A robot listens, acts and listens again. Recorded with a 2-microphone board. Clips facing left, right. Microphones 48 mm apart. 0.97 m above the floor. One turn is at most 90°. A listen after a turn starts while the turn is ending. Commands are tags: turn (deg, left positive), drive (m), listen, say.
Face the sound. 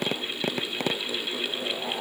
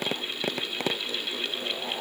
<listen/>
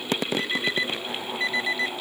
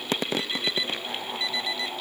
<turn deg="35"/>
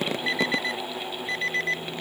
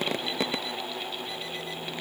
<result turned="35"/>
<turn deg="90"/>
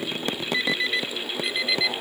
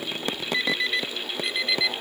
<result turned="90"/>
<say>Found it: an alarm clock, straight ahead.</say>